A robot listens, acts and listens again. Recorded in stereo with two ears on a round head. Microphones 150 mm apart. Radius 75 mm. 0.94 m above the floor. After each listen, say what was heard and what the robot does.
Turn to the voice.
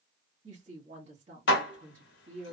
The woman speaking: about 40° right or 140° right. Turn 40° right.
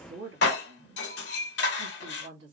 So it is at 95° right. Turn 95° right.
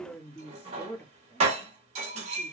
The woman speaking is now 15° left. Turn 15° left.
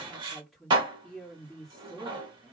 Found it: a woman speaking, straight ahead.